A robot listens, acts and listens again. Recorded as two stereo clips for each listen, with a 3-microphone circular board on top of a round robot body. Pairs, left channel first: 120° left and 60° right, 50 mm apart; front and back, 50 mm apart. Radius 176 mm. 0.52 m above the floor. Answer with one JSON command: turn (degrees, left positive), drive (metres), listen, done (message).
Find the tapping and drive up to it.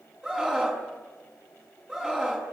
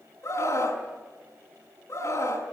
{"listen": true}
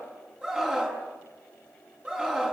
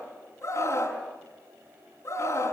{"listen": true}
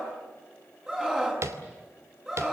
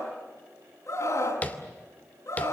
{"turn": -60}
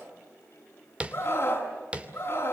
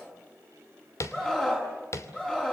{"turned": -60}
{"drive": 1.0}
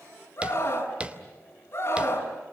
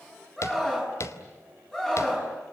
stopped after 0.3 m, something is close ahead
{"done": "Something is in my way. I am facing the tapping but have not reached it."}